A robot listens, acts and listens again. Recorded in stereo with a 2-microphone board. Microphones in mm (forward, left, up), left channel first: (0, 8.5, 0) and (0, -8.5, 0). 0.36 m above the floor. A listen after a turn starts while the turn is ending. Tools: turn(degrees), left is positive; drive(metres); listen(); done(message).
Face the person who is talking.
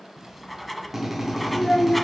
turn(degrees=55)
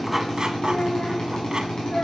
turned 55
turn(degrees=50)
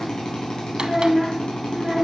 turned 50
turn(degrees=-20)
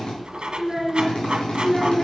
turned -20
turn(degrees=-10)
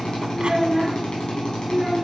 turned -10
done("Found it: a child speaking, straight ahead, 2 to 4 m away.")